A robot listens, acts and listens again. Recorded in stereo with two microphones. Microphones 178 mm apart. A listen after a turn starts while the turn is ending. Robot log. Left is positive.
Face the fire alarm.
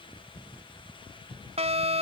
note: The fire alarm: about 35° right or 145° right.
cmd yaw -35
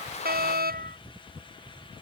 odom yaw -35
note: So it is at 105° right.
cmd yaw -105
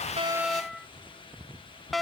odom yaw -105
end: Facing the fire alarm.